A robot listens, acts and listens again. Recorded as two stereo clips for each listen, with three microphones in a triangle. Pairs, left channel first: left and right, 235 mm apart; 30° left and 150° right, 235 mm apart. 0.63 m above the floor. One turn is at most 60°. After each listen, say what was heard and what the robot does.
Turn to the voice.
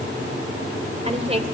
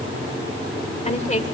The woman speaking: 30° right. Turn 30° right.
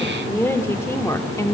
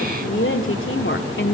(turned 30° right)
The woman speaking is now 15° left. Turn 15° left.
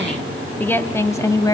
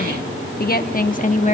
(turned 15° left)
The woman speaking is now 35° left. Turn 35° left.
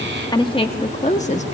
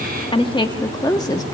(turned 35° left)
The woman speaking is now 85° left. Turn 60° left.
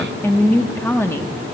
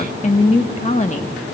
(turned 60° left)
The woman speaking is now 20° left. Turn 20° left.
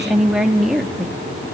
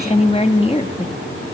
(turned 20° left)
Facing the woman speaking.